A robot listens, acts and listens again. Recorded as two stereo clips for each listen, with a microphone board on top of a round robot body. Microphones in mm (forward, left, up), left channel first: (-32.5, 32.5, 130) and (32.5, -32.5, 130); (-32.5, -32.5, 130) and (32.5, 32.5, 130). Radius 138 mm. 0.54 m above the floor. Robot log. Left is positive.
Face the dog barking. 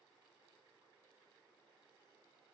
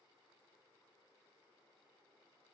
cmd idle
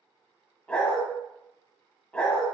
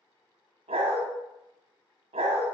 note: The dog barking: 60° left.
cmd yaw +60
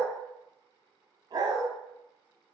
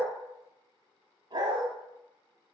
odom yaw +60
end: Facing the dog barking, under 1 m away.